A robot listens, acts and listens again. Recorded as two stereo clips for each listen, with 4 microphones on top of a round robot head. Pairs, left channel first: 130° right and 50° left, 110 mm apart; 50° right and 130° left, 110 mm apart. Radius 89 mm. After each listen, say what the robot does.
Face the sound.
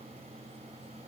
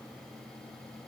Keep listening.
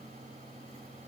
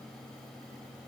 Keep listening.
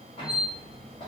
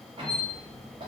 Turn 180° left.
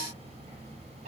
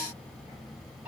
Turn 55° left.
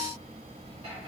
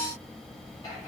Found it: a squeak, straight ahead.